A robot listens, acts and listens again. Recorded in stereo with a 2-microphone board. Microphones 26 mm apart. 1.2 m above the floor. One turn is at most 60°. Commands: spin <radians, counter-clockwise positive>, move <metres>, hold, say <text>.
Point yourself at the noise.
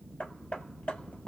spin 1.05
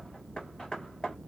spin 0.52
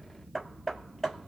say Facing the hammering.